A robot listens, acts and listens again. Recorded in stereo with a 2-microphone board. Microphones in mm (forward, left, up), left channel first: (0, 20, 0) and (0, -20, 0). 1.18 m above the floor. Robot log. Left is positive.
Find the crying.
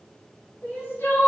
note: The crying: about 60° left or 120° left.
cmd yaw +60
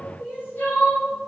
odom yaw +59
note: So it is at 55° left.
cmd yaw +55
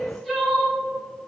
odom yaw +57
end: Facing the crying.